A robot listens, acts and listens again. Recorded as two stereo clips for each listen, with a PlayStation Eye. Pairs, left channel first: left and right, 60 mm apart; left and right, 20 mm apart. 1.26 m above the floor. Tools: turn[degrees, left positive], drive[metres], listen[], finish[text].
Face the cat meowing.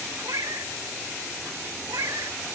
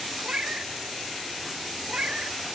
Thought: The cat meowing: about 70° right or 110° right.
Action: turn[-70]
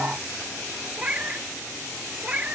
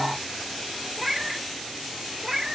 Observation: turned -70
Thought: So it is at 20° right.
Action: turn[-20]
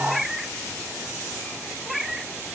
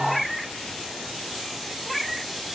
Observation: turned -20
Action: finish[Facing the cat meowing, 1 to 2 m away.]